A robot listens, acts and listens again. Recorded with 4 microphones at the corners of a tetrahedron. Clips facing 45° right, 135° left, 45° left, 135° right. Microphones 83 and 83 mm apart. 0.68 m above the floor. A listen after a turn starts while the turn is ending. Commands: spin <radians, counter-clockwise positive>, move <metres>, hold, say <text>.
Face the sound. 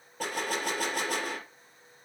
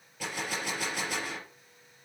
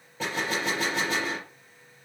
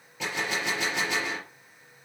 say Found it: a gunshot, straight ahead.